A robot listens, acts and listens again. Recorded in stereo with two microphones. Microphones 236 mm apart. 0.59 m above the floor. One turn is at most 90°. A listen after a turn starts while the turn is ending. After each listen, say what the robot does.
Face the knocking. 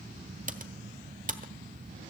Keep listening.
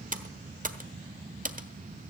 Keep listening.
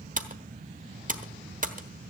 I can't make out knocking, only typing on a keyboard.